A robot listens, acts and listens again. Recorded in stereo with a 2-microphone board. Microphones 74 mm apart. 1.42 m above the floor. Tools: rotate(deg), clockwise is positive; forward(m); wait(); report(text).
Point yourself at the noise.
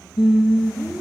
rotate(15)
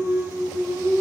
rotate(35)
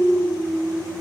rotate(105)
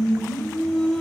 rotate(-10)
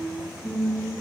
report("Found it: singing, straight ahead, 2 to 4 m away.")